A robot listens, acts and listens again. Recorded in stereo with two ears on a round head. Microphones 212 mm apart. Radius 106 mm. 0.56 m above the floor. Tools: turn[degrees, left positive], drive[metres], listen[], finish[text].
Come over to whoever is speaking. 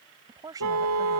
Thought: The woman speaking: about 15° right or 165° right.
Action: turn[-15]
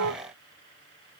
Action: listen[]
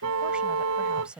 Action: drive[1.0]
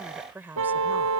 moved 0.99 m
Thought: The woman speaking is now 10° right.
Action: turn[-10]
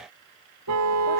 Action: listen[]
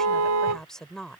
Action: drive[1.0]
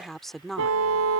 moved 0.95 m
Action: drive[1.0]
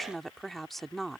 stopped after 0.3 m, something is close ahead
Action: finish[Arrived at the woman speaking, straight ahead.]